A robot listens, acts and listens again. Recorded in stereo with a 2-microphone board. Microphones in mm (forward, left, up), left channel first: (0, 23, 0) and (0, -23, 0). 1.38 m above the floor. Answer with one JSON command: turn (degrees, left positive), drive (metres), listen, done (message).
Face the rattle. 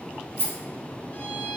{"turn": -50}
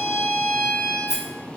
{"done": "Found it: a rattle, straight ahead, 1 to 2 m away."}